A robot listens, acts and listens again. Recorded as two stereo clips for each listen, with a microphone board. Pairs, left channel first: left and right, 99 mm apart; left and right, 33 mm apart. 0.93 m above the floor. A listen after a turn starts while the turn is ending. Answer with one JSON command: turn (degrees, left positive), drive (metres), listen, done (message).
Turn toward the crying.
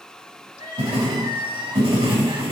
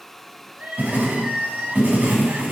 {"turn": -50}
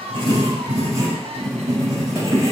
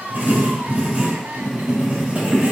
{"listen": true}
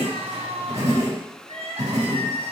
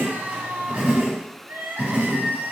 {"turn": -80}
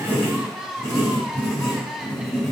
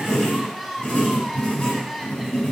{"done": "Facing the crying, under 1 m away."}